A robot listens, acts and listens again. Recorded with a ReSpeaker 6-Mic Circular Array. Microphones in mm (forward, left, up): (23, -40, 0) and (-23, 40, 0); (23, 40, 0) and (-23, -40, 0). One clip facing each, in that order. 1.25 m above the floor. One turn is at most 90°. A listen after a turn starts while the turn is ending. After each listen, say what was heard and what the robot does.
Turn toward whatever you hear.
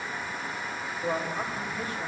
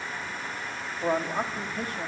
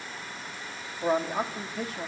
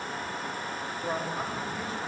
The man speaking: 80° left. Turn 80° left.
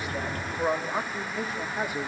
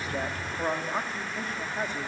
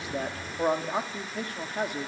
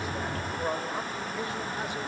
The man speaking is now 20° left. Turn 20° left.
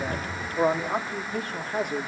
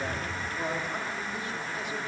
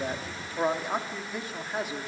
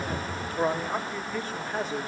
The man speaking is now 25° right. Turn 25° right.
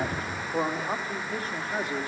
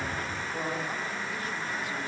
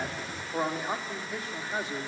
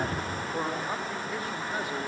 The man speaking is now 10° right. Turn 10° right.
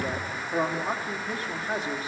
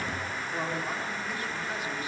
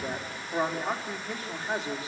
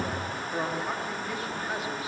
Facing the man speaking.